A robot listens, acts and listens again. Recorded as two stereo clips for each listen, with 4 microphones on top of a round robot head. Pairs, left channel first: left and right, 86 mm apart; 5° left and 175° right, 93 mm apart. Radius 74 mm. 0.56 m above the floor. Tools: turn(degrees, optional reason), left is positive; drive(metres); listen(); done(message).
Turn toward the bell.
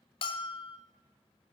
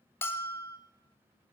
turn(degrees=70, reason="The bell: 70° left.")
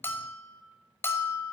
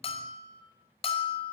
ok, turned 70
turn(degrees=25, reason="The bell is now 25° left.")
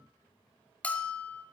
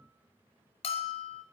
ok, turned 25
turn(degrees=15, reason="The bell is now 15° left.")
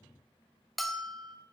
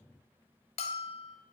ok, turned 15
done("Found it: a bell, straight ahead, 1 to 2 m away.")